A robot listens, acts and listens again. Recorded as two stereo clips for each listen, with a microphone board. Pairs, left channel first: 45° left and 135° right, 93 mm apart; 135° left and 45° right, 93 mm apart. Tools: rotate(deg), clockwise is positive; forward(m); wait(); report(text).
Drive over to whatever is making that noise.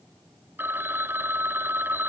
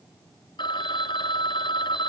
rotate(-160)
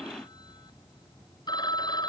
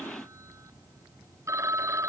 rotate(-10)
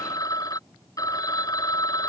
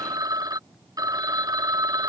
forward(1.0)
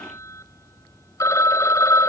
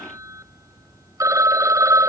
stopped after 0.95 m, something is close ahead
report("I am next to the phone ringing.")